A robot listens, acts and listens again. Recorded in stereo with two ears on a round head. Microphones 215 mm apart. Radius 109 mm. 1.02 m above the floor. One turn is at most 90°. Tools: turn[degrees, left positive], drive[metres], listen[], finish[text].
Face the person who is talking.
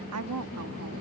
Thought: The woman speaking: about 70° right or 110° right.
Action: turn[-70]
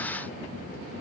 Action: listen[]
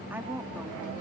Thought: So it is at 10° right.
Action: turn[-10]
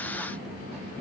Action: listen[]
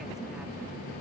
Action: listen[]
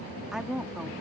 Action: finish[Facing the woman speaking.]